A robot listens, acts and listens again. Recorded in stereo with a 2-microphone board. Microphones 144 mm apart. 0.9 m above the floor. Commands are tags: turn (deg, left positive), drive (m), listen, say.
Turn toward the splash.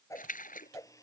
<turn deg="70"/>
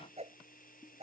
<listen/>
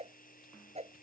<say>I heard a splash, but can't make it out now. It was about straight ahead or 40° left.</say>